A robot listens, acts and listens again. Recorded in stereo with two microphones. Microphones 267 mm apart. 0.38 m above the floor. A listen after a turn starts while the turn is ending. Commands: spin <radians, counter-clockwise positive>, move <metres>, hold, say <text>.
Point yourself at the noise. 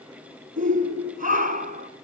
spin -0.52
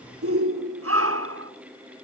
spin -2.01
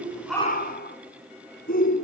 spin 0.61
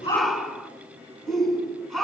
say Found it: a shout, straight ahead.